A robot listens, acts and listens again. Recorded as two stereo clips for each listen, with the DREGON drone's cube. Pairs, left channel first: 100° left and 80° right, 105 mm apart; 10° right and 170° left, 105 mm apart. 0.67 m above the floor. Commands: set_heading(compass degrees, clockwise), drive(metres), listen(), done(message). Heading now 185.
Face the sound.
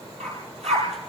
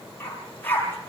set_heading(270)
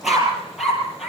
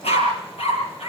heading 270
done("Found it: a dog barking, straight ahead.")